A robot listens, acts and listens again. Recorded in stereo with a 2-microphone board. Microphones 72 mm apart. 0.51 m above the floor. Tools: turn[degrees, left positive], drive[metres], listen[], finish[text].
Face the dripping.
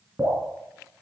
Thought: The dripping: about 20° right or 160° right.
Action: turn[-20]
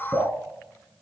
Action: finish[Found it: dripping, straight ahead.]